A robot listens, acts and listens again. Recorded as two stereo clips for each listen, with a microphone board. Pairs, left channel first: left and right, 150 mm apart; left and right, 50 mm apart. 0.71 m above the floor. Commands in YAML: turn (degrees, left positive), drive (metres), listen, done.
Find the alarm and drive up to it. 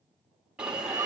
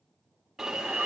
turn: -30
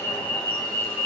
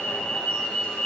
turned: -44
turn: 35
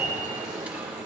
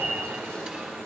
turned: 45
turn: -10
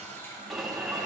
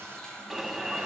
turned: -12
drive: 1.0
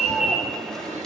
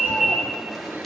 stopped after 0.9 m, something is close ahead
done: "Arrived at the alarm, straight ahead."